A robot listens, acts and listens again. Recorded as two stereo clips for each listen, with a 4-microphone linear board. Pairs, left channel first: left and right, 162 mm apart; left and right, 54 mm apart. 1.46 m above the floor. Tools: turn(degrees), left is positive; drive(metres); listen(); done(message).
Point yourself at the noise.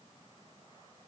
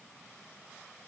listen()
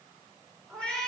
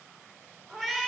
turn(degrees=30)
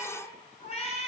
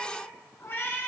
turn(degrees=135)
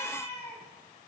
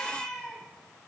turn(degrees=10)
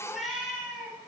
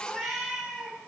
done("Facing the cat meowing, over 4 m away.")